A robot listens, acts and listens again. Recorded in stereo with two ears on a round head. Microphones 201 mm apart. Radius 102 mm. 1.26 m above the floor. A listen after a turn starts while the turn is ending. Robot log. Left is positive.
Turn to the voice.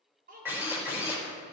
note: The child speaking: about 40° right or 140° right.
cmd yaw -40
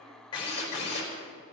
cmd idle
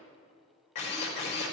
cmd idle
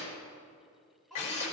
end: Found it: a child speaking, straight ahead, over 4 m away.